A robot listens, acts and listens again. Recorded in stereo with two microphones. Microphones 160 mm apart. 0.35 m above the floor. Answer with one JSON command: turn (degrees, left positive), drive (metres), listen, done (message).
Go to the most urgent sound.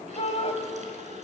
{"turn": 40}
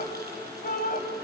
{"turn": 90}
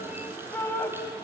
{"turn": 15}
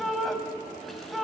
{"drive": 1.0}
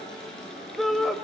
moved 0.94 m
{"drive": 1.0}
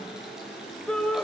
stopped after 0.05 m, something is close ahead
{"done": "Arrived at the shout, straight ahead."}